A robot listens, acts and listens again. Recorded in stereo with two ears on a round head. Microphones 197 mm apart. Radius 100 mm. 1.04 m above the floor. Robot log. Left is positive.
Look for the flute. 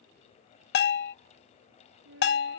note: The flute: about 60° right or 120° right.
cmd yaw -60
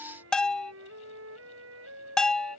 note: So it is at 60° right.
cmd yaw -60
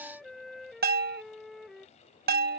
end: Facing the flute.